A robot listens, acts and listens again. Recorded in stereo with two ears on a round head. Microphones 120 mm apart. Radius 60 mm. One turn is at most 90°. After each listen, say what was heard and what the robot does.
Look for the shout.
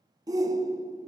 The shout: about 25° right or 155° right. Turn 25° right.
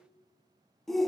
Facing the shout, under 1 m away.